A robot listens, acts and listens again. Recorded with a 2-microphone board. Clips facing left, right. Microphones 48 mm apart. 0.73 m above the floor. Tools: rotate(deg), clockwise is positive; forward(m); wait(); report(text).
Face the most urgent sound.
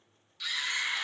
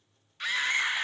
rotate(40)
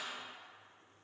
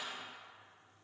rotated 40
wait()
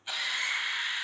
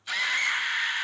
rotate(90)
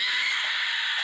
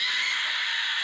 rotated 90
report("Facing the scream, under 1 m away.")